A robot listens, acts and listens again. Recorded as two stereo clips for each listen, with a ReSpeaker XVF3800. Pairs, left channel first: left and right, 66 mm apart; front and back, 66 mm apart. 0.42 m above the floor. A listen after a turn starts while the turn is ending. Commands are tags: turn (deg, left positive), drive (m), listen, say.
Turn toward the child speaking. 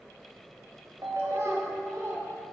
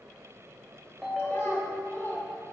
<turn deg="-55"/>
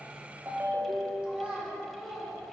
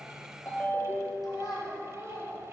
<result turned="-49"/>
<turn deg="-20"/>
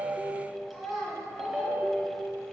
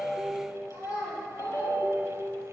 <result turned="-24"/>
<say>Facing the child speaking.</say>